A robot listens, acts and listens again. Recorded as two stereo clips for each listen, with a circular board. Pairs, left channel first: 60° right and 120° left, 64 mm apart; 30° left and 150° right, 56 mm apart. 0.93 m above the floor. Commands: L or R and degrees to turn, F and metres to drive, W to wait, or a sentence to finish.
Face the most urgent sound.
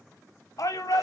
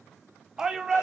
R70
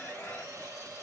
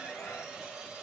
W
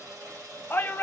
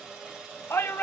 R10
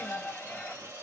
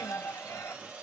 Facing the shout.